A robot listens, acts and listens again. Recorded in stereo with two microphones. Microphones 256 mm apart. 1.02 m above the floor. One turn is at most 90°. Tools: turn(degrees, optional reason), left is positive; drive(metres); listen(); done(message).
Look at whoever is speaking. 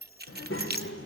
turn(degrees=55, reason="The child speaking: about 55° left or 125° left.")
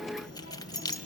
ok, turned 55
turn(degrees=70, reason="So it is at 70° left.")
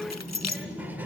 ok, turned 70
done("Facing the child speaking, 1 to 2 m away.")